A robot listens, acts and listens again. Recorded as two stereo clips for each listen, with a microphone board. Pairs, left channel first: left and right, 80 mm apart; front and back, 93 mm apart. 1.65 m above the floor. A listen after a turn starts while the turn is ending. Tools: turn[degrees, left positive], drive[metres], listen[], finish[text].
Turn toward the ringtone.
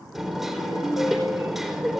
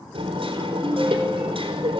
Thought: The ringtone: 115° left.
Action: turn[115]
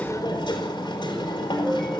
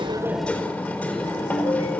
Action: finish[Found it: a ringtone, straight ahead.]